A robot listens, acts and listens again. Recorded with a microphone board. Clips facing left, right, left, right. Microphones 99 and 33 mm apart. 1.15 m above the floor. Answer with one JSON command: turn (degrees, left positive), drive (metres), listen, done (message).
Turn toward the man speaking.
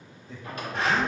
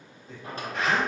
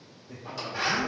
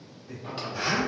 {"turn": -75}
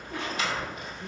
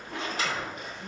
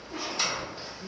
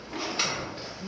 {"listen": true}
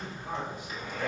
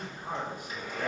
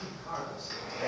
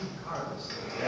{"turn": -45}
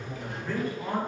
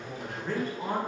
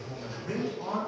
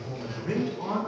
{"turn": -40}
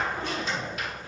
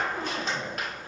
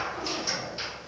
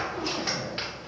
{"listen": true}
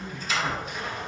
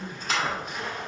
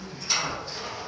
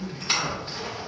{"turn": -25}
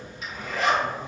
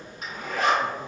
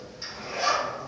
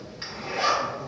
{"listen": true}
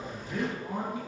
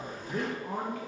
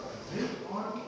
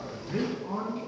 {"turn": -20}
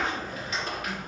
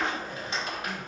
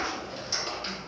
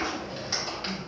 {"listen": true}
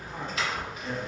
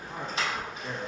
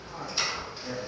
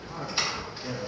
{"done": "Found it: a man speaking, straight ahead."}